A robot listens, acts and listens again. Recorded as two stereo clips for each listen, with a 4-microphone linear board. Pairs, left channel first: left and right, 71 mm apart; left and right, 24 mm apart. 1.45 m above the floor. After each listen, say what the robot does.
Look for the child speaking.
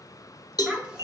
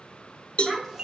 Turn 30° right.
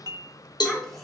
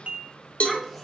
Facing the child speaking, 1 to 2 m away.